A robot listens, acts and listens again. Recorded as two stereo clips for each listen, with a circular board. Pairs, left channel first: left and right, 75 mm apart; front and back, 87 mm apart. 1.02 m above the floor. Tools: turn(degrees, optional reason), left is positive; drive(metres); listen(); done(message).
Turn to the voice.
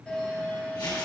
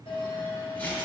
listen()
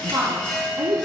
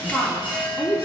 turn(degrees=-90, reason="The woman speaking: 90° right.")
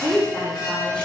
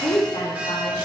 done("Facing the woman speaking, 2 to 4 m away.")